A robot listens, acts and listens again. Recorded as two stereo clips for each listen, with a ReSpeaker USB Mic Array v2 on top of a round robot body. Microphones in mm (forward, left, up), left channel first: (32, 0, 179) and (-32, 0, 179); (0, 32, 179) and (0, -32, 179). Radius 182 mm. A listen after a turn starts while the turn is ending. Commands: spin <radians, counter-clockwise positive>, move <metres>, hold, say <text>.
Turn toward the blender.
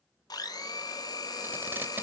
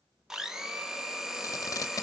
spin -0.17
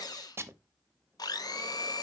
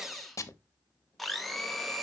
say Facing the blender.